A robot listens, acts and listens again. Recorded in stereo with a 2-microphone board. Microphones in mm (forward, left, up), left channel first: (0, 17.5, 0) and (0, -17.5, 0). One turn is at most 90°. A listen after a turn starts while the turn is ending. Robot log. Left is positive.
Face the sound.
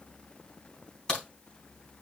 note: The crack: about 20° left or 160° left.
cmd yaw +20
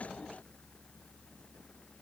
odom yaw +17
cmd idle
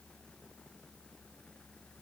end: I heard a crack, but can't make it out now. It was about straight ahead or 145° left.